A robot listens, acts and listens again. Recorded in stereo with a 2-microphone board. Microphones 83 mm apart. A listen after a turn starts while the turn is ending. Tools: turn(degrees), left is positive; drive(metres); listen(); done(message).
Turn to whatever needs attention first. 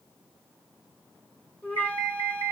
turn(degrees=60)
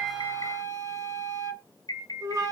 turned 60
turn(degrees=55)
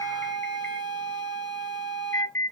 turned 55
turn(degrees=30)
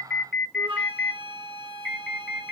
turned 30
done("Facing the alarm.")